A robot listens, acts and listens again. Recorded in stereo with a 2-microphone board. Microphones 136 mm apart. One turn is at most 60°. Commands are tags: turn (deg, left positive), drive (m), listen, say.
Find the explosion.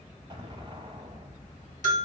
<turn deg="-40"/>
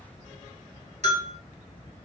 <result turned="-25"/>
<listen/>
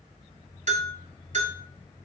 <say>I heard an explosion, but can't make it out now. It was about 15° right or 115° right.</say>